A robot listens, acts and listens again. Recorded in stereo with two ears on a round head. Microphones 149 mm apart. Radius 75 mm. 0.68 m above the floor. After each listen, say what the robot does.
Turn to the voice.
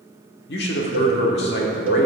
Turn 70° left.
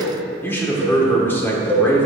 Turn 15° left.
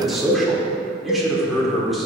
Found it: a man speaking, straight ahead.